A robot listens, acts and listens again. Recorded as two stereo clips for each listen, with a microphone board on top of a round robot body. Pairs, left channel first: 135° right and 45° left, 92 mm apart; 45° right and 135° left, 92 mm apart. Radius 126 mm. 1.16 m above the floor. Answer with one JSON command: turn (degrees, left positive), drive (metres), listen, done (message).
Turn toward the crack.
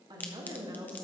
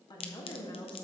{"turn": -65}
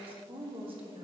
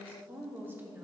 {"done": "Facing where the crack came from. I can't hear it now."}